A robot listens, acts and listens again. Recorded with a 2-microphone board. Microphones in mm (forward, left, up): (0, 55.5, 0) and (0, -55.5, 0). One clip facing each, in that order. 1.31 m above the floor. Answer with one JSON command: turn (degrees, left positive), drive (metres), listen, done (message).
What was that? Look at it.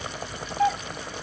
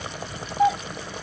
{"turn": -30}
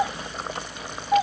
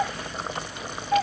{"turn": 15}
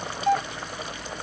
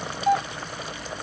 {"done": "Found it: a doorbell, straight ahead."}